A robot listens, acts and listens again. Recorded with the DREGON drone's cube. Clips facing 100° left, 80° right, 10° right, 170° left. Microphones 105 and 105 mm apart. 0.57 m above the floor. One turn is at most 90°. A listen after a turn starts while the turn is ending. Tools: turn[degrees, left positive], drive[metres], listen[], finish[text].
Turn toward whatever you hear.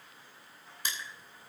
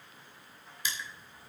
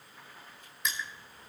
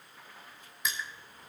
Thought: The crushing: 80° left.
Action: turn[80]
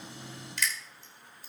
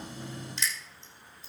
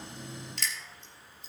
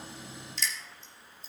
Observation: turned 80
Thought: The crushing is now 25° right.
Action: turn[-25]
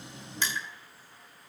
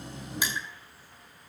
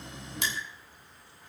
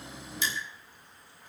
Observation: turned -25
Action: finish[Found it: crushing, straight ahead, 2 to 4 m away.]